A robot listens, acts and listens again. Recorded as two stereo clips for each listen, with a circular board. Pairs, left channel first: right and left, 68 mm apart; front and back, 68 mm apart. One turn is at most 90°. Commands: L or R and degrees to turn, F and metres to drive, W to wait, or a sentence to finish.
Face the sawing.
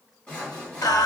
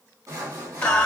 R90
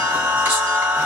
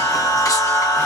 R75
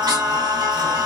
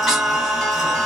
W
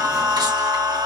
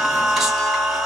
I heard sawing from this way, but can't make it out now.